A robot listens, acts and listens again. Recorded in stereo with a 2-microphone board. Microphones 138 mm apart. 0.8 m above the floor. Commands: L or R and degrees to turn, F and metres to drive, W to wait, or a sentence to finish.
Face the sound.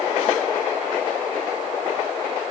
W
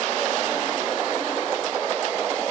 W
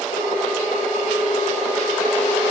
L90
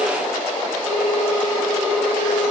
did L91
Facing the ringtone.